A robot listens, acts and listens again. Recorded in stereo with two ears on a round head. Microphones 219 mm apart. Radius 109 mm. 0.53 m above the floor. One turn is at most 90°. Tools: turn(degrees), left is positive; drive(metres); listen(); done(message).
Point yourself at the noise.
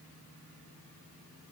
listen()
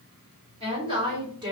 turn(degrees=-20)
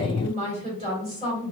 turn(degrees=-25)
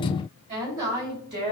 turn(degrees=-90)
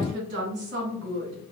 turn(degrees=-50)
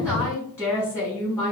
turn(degrees=10)
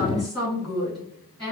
done("Facing the woman speaking.")